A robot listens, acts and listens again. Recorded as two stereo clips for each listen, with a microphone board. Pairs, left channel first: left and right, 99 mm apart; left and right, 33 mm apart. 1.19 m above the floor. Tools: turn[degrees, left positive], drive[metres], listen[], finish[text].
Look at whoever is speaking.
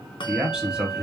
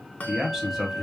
Action: turn[-30]
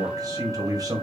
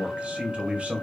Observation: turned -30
Thought: So it is at 140° right.
Action: turn[-140]
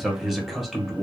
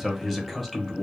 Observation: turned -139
Action: finish[Found it: a man speaking, straight ahead.]